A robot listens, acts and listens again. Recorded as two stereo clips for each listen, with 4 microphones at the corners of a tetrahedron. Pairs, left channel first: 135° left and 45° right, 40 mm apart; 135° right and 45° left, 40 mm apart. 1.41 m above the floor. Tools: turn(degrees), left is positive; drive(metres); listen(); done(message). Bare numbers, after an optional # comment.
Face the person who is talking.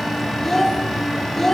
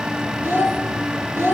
# The child speaking: 55° left.
turn(55)
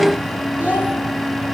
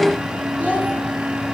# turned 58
listen()
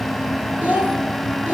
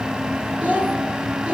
done("Facing the child speaking.")